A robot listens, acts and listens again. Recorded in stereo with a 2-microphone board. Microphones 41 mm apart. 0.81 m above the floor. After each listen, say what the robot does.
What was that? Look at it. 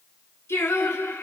Turn 90° left.
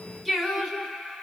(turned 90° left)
Facing the singing, 2 to 4 m away.